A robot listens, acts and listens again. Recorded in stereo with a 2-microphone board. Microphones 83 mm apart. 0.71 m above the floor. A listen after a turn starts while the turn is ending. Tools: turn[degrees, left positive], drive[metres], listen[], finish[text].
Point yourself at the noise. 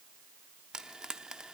Action: turn[-30]
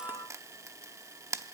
Thought: So it is at 140° right.
Action: turn[-140]
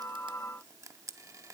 Thought: The frying is now 40° right.
Action: turn[-40]
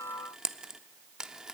Thought: The frying is now 10° right.
Action: turn[-10]
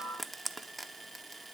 Action: finish[Found it: frying, straight ahead.]